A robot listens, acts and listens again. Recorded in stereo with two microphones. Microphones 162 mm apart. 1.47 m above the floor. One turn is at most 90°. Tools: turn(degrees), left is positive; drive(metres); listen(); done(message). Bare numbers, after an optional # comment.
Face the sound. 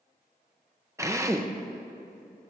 # The drill: about 20° right or 160° right.
turn(-20)
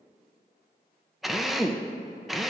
done("Facing the drill.")